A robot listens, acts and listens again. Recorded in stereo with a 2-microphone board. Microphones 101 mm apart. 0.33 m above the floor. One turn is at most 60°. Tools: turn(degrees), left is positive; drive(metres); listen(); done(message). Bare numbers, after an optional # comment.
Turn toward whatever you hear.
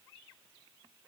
listen()
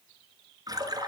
# The splash: about 40° right or 140° right.
turn(-40)
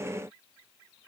listen()
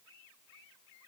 done("I heard a splash, but can't make it out now. It was about straight ahead or 100° right.")